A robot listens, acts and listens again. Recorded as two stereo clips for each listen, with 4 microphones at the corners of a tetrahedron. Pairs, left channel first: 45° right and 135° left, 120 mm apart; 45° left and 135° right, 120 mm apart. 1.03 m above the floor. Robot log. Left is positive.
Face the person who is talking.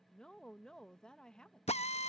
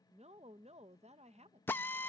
note: The woman speaking: 130° right.
cmd yaw -130
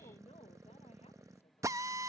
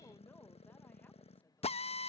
cmd idle
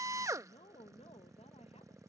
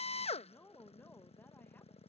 note: The woman speaking is now 30° right.
cmd yaw -30
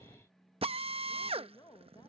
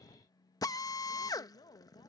end: Facing the woman speaking.